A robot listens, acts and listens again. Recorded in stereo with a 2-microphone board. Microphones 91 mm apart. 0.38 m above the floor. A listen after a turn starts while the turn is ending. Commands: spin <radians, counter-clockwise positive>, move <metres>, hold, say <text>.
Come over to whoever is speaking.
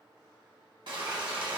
hold
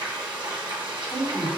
spin 0.96
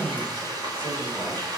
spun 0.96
hold
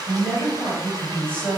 spin 0.44
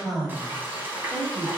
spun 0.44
move 1.0
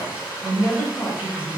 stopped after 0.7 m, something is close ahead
say Arrived at the man speaking, straight ahead.